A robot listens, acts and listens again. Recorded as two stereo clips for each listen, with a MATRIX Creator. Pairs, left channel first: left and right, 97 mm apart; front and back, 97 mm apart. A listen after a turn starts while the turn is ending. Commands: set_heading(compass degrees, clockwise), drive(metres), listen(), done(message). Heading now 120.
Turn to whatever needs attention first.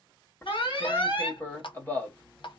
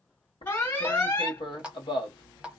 set_heading(55)
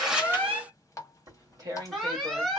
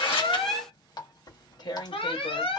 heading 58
done("Facing the alarm.")